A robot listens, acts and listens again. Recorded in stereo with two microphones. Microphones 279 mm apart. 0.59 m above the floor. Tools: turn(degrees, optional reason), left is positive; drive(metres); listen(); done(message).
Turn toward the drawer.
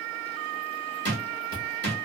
turn(degrees=-40, reason="The drawer: about 40° right or 140° right.")
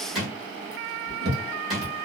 done("Facing the drawer, 1 to 2 m away.")